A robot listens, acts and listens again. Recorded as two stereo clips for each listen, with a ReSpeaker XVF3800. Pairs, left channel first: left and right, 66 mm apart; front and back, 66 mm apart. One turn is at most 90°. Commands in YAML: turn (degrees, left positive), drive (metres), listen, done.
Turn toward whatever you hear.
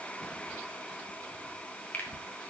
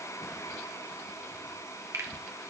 turn: 90
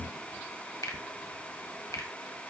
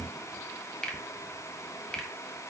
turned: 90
turn: 75
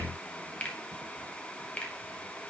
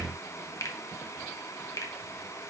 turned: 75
turn: 25
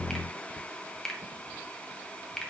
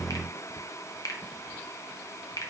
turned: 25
turn: 10
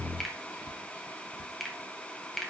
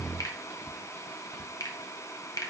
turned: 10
done: "Found it: a finger snap, straight ahead, 1 to 2 m away."